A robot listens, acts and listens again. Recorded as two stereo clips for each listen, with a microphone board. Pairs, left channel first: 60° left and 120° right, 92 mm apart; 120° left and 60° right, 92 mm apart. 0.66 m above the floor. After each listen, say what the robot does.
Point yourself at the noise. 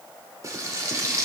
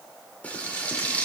Turn 170° right.
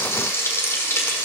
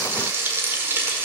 Found it: frying, straight ahead, 1 to 2 m away.